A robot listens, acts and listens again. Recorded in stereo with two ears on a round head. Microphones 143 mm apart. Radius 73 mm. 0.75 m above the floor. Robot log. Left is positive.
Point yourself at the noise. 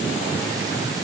cmd idle
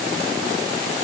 cmd idle
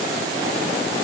end: I can't make out anything to turn to.